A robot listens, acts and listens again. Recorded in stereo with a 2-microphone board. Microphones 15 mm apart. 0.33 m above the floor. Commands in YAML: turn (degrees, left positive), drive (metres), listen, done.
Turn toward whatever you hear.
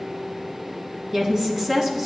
turn: -25
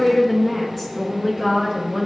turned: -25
done: "Facing the woman speaking."